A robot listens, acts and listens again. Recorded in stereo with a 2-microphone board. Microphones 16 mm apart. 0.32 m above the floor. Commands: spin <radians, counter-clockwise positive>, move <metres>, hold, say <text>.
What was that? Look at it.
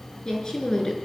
spin 0.70
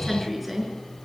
say Facing the woman speaking.